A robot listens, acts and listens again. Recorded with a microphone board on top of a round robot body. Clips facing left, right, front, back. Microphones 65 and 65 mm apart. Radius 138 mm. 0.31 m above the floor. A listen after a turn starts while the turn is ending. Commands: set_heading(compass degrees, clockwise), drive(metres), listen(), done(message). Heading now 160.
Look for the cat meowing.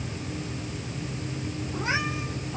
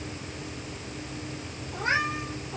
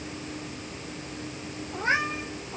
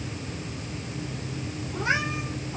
set_heading(205)
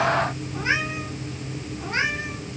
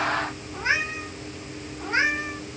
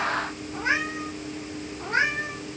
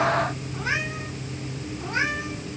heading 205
set_heading(230)
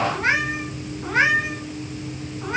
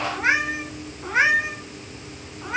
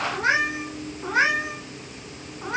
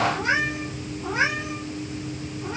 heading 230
done("Facing the cat meowing.")